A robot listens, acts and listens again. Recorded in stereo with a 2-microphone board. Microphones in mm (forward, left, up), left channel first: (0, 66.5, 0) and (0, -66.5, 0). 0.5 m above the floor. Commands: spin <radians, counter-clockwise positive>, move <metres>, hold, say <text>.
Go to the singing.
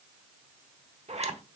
hold
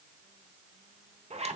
hold
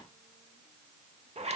say I can't make out singing to turn to.